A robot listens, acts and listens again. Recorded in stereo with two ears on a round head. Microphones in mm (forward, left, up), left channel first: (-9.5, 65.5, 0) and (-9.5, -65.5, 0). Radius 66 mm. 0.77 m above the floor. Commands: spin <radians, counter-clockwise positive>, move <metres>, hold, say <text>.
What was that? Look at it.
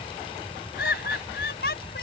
spin 1.22
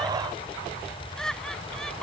say Found it: laughter, straight ahead.